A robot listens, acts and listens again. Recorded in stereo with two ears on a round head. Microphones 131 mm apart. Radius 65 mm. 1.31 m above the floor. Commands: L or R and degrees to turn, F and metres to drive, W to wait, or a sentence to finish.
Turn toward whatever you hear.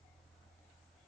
W
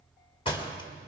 L35
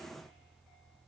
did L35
W
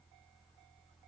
I heard a door slam, but can't make it out now. It was about straight ahead or 110° left.